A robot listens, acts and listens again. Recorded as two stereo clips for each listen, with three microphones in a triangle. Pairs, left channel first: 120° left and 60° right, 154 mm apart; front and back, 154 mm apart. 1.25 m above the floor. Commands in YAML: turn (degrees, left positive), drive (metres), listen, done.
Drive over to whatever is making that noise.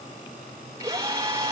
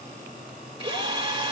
turn: -130
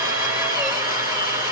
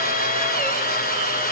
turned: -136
drive: 1.0
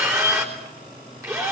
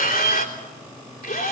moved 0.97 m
turn: 10
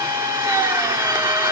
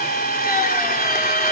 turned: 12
drive: 1.0
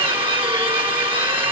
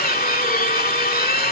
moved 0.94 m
drive: 1.0
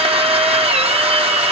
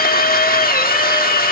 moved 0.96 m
turn: -10
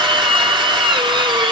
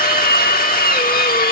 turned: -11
drive: 1.0
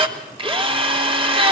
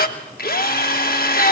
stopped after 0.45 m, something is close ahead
done: "Arrived at the drill, straight ahead."